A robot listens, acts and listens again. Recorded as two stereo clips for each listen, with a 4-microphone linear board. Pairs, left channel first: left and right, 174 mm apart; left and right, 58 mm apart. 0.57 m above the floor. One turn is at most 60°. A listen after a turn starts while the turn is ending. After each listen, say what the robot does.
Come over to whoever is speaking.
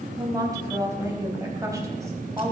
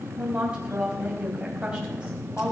Turn 20° right.
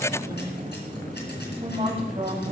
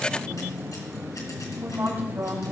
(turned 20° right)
Turn 60° right.
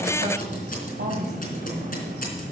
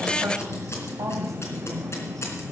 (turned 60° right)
Turn 60° right.
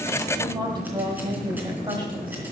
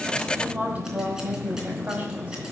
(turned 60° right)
Turn 25° right.
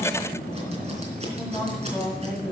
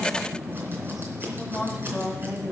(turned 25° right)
Drive 1.0 m forward.
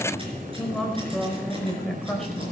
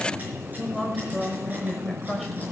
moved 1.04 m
Drive 1.0 m forward.
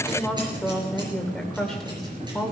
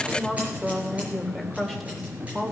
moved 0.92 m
Drive 1.0 m forward.
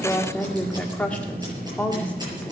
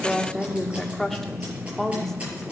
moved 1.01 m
Turn 10° left.
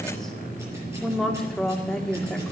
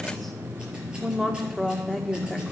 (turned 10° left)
Drive 1.0 m forward.
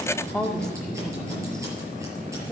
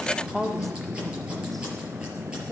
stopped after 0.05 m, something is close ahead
I am next to the woman speaking.